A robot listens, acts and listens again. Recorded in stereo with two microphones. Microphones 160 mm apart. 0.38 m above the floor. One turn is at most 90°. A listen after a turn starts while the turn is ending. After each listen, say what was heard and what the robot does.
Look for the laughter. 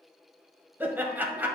Turn 30° right.
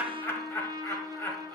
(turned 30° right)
So it is at 20° left. Turn 20° left.
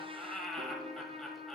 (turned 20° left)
Facing the laughter, 1 to 2 m away.